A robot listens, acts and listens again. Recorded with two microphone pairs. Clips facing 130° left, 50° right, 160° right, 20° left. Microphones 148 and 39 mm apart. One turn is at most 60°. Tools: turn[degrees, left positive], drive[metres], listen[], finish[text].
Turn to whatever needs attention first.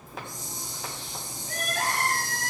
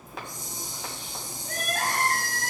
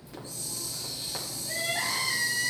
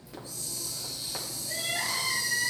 Thought: The crying: 90° right.
Action: turn[-60]
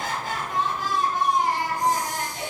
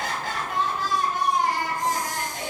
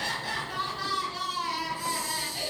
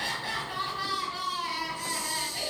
Thought: The crying is now 55° right.
Action: turn[-55]
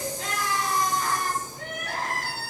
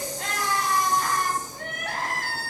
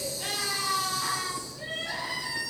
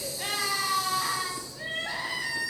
Thought: The crying is now 20° right.
Action: turn[-20]
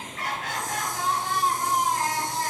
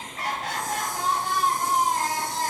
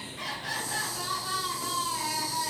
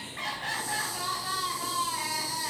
Action: finish[Found it: crying, straight ahead.]